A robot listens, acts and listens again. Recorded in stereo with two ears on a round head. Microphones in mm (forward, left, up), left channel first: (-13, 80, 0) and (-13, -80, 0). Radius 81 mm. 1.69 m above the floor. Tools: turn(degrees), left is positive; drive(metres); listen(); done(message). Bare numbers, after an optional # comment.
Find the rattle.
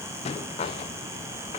# The rattle: about 30° left or 150° left.
turn(30)
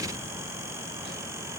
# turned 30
listen()
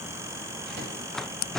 done("Facing the rattle.")